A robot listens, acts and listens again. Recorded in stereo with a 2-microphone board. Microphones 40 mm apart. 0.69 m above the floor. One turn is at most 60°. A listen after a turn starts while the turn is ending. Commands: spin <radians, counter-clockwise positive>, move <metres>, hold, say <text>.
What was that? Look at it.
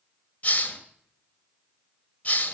spin 0.70
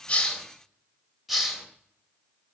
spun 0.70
say Facing the hiss, 1 to 2 m away.